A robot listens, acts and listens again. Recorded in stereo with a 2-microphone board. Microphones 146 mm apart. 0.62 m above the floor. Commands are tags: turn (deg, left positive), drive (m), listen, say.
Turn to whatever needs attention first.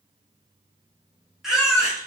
<turn deg="30"/>
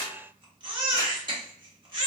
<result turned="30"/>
<turn deg="-35"/>
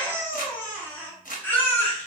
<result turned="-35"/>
<turn deg="15"/>
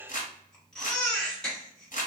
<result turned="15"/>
<say>Found it: a baby crying, straight ahead, 1 to 2 m away.</say>